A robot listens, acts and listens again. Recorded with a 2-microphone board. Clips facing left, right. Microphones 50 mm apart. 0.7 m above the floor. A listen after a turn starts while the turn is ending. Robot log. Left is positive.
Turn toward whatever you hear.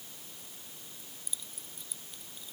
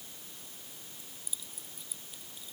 cmd yaw -30
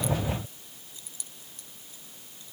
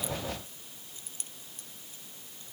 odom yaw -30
note: So it is at 145° right.
cmd yaw -145
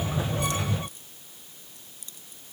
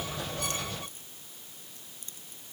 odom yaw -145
note: The keys jangling is now 35° right.
cmd yaw -35
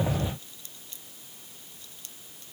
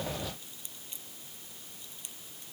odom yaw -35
note: The keys jangling is now 20° right.
cmd yaw -20
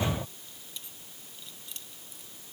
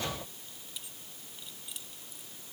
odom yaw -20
end: Facing the keys jangling.